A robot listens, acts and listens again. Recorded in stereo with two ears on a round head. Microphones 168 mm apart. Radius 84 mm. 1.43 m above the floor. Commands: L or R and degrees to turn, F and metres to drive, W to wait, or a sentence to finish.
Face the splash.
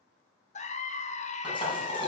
L25
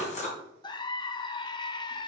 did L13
L140
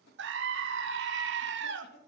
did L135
I heard a splash from this way, but can't make it out now.